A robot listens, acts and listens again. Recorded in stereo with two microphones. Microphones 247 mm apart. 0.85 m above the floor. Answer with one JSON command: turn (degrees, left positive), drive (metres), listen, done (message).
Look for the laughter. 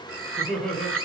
{"turn": 30}
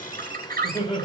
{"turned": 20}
{"turn": 155}
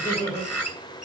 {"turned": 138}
{"turn": 15}
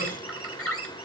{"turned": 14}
{"listen": true}
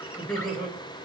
{"done": "Found it: laughter, straight ahead, over 4 m away."}